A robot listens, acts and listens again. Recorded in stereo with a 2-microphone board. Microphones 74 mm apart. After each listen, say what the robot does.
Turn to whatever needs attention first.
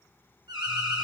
Turn 90° right.
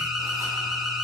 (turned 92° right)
Found it: an alarm, straight ahead.